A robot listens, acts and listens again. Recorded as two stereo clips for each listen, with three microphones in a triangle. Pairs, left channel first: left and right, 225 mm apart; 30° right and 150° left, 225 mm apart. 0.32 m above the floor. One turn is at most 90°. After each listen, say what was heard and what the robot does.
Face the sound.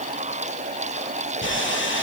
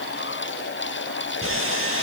The sawing: 125° left. Turn 90° left.
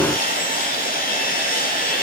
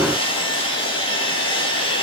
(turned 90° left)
The sawing is now 35° left. Turn 35° left.
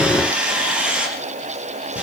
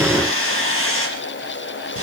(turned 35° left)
Facing the sawing.